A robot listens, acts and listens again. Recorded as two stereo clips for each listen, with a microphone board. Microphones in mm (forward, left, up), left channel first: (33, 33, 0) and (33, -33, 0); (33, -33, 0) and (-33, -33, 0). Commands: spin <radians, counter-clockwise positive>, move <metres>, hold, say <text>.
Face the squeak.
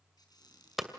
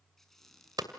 spin 1.48
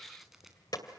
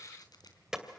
hold
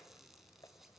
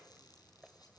hold
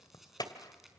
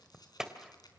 say I heard a squeak from this way, but can't make it out now.